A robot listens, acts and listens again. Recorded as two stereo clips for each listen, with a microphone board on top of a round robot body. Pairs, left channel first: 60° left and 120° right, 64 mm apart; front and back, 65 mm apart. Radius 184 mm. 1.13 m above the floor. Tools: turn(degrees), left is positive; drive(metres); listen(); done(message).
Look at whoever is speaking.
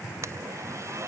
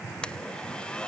listen()
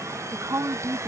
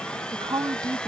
turn(degrees=-165)
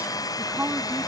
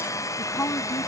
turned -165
turn(degrees=-50)
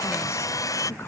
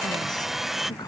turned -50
listen()
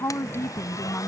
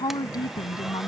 done("Facing the woman speaking.")